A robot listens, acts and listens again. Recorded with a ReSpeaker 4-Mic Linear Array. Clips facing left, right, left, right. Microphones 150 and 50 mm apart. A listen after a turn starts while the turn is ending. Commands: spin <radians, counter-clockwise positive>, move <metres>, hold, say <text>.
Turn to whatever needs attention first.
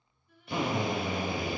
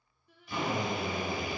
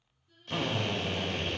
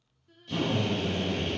spin -1.57
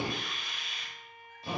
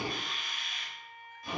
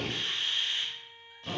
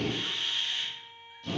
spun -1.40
spin -0.17
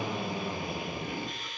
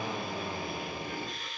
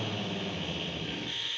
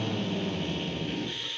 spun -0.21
hold
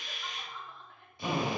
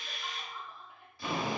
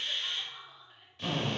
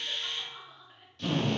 spin -0.17
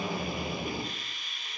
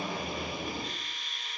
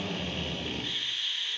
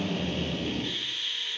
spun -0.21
hold
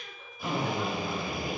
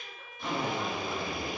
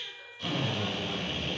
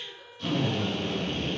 hold
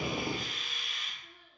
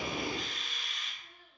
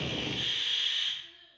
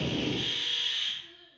say Facing the crying, under 1 m away.